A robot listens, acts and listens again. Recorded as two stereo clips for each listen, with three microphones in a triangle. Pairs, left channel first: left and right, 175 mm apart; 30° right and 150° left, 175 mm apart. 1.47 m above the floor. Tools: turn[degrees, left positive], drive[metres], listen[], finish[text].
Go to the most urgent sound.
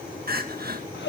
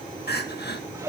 Thought: The crying: 60° right.
Action: turn[-60]
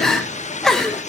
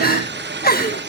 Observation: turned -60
Action: drive[1.0]
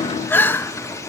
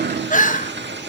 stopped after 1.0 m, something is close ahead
Thought: The crying is now 10° left.
Action: turn[10]
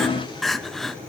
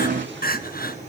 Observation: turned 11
Action: finish[I am next to the crying.]